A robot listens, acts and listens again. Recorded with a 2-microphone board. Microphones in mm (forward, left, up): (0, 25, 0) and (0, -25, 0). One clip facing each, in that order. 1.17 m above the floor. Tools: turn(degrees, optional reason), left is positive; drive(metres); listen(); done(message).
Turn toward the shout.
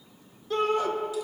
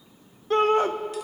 turn(degrees=-40, reason="The shout: about 40° right or 140° right.")
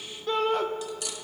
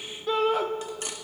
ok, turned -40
done("Facing the shout, under 1 m away.")